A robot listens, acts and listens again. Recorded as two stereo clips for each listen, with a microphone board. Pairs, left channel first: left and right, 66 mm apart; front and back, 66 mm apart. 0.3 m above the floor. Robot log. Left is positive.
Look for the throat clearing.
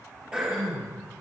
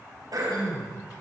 note: The throat clearing: 165° right.
cmd yaw -165
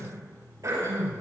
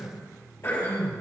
note: The throat clearing is now 50° right.
cmd yaw -50
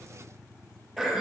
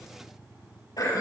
end: Facing the throat clearing.